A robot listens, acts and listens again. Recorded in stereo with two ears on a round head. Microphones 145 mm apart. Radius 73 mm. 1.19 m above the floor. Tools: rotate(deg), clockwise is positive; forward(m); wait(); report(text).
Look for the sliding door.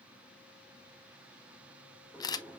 rotate(30)
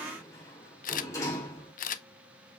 rotate(-20)
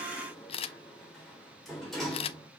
report("Found it: a sliding door, straight ahead, 2 to 4 m away.")